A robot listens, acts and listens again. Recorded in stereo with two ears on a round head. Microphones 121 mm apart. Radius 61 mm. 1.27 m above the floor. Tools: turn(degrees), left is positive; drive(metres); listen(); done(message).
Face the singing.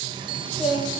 turn(degrees=-30)
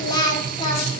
turn(degrees=35)
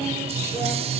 listen()
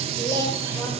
turn(degrees=20)
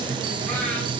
listen()
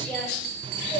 turn(degrees=15)
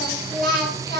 done("Found it: singing, straight ahead.")